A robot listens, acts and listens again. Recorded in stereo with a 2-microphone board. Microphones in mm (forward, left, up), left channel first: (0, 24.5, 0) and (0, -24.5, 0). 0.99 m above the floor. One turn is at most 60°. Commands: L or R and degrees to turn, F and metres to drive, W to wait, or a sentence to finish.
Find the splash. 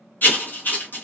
W
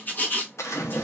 L60
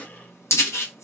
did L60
L30
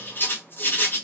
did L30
Facing where the splash came from. I can't hear it now.